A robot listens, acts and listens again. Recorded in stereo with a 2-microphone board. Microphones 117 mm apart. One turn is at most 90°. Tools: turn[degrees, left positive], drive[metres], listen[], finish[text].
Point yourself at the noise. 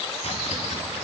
Thought: The chopping: about 60° left or 120° left.
Action: turn[60]
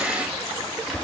Action: finish[Facing the chopping, over 4 m away.]